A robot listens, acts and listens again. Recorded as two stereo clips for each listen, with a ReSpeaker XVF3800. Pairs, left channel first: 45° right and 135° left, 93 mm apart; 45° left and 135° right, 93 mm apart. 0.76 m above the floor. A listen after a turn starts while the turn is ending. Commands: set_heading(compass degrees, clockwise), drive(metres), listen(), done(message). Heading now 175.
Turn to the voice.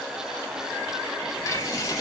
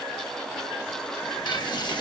listen()
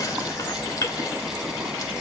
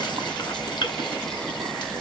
listen()
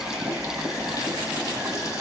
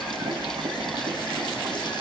done("I can't make out anyone speaking, only boiling.")